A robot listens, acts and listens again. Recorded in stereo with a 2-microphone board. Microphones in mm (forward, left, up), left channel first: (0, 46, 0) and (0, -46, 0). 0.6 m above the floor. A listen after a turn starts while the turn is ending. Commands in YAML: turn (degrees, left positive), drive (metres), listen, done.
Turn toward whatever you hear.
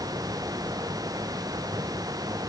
listen: true
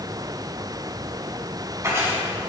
turn: -30
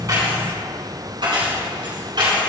turn: -120
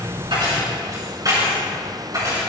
turn: -45
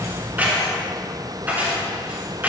turn: -20
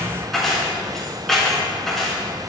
done: "Found it: keys jangling, straight ahead."